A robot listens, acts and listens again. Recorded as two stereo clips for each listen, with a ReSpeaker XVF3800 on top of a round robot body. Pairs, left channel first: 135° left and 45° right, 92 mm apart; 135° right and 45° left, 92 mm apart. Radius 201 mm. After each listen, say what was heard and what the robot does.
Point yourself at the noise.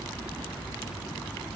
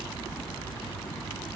Keep listening.
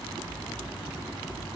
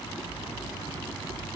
Keep listening.
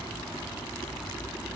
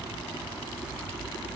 I can't make out anything to turn to.